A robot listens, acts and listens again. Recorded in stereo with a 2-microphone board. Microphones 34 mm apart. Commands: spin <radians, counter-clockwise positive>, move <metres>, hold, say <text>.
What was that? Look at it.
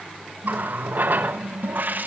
spin -1.05
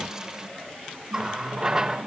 spin -0.26
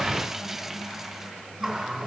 say Found it: a running tap, straight ahead.